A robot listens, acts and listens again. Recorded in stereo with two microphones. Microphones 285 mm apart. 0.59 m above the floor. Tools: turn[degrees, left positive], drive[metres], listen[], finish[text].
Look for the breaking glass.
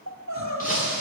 Thought: The breaking glass: about 30° left or 150° left.
Action: turn[30]
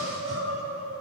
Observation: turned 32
Action: listen[]
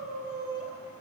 Action: finish[I heard breaking glass, but can't make it out now. It was about 5° right or 120° left.]